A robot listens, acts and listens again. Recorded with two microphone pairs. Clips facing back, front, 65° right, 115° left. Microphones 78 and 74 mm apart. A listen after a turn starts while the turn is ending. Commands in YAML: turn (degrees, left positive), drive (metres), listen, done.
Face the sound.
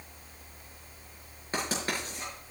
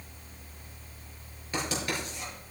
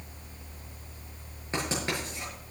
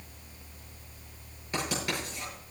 turn: -125
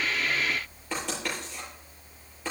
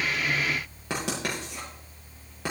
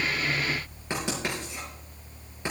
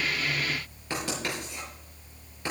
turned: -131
done: "Found it: writing, straight ahead."